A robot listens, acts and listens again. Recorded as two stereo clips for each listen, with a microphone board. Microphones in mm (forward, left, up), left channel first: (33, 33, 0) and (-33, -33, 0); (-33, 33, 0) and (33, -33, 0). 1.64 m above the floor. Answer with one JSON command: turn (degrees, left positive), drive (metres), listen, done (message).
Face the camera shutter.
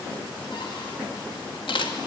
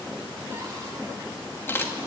{"turn": 70}
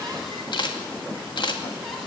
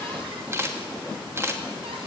{"turn": 15}
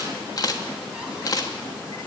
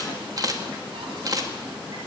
{"done": "Facing the camera shutter, 2 to 4 m away."}